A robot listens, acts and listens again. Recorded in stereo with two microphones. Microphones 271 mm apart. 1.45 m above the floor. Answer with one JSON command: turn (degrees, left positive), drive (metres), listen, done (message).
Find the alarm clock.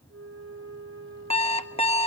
{"turn": 25}
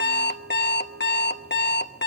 {"turn": 130}
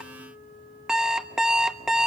{"done": "Facing the alarm clock, 1 to 2 m away."}